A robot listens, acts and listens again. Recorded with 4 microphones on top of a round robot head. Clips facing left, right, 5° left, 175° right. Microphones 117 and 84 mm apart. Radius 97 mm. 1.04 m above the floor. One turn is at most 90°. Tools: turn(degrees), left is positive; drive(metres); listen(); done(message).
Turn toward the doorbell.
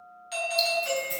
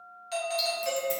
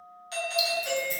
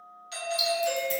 turn(degrees=-40)
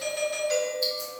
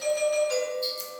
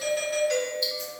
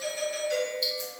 done("Found it: a doorbell, straight ahead, 1 to 2 m away.")